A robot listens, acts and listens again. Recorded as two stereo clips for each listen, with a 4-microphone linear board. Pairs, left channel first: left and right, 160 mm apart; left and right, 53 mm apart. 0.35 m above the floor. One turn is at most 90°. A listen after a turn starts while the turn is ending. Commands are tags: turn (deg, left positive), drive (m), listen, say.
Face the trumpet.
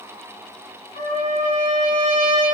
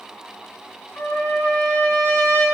<turn deg="50"/>
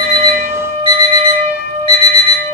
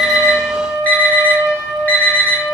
<turn deg="75"/>
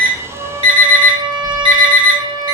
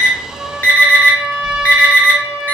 <turn deg="-25"/>
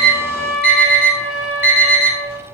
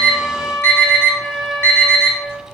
<say>Facing the trumpet.</say>